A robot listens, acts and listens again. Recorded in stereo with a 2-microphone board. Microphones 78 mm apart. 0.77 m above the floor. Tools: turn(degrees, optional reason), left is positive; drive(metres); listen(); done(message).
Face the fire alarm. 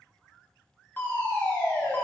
turn(degrees=25, reason="The fire alarm: about 25° left or 155° left.")
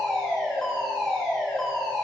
turn(degrees=10, reason="So it is at 10° left.")
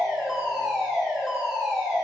done("Facing the fire alarm, 2 to 4 m away.")